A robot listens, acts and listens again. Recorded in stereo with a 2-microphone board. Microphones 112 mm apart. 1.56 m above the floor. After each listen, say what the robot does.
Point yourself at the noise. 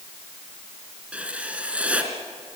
Turn 30° right.
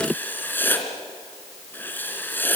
Turn 20° left.
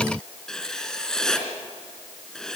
Facing the writing, 2 to 4 m away.